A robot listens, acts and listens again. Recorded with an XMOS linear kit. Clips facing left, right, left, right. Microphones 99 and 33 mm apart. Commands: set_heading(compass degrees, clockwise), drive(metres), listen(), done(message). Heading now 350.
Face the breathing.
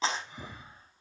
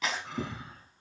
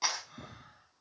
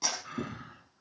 set_heading(80)
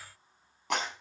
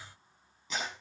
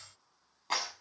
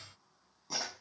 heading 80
listen()
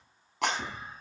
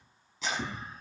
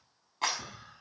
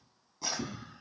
done("Found it: breathing, straight ahead.")